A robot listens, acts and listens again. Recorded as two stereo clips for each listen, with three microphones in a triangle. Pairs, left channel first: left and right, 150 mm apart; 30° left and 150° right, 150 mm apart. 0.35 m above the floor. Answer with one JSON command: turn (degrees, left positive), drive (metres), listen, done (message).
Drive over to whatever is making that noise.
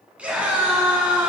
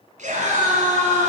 {"turn": -170}
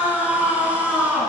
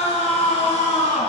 {"turn": -10}
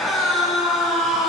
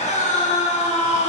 {"drive": 1.0}
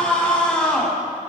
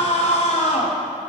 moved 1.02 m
{"turn": 10}
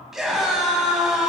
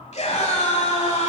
{"drive": 1.0}
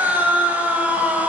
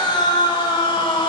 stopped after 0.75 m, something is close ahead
{"turn": -15}
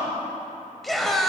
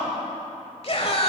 {"done": "I am next to the scream."}